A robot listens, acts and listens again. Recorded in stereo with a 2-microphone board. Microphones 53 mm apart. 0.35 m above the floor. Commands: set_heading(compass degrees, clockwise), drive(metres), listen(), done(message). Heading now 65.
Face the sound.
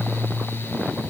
listen()
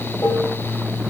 set_heading(350)
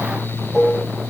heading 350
done("Facing the dishes clattering, over 4 m away.")